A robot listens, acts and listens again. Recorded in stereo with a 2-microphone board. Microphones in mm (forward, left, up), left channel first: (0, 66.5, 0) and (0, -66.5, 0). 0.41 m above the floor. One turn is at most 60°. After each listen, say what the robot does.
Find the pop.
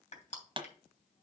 Turn 40° right.
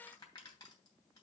Keep listening.
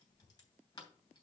I heard a pop, but can't make it out now. It was about straight ahead or 100° right.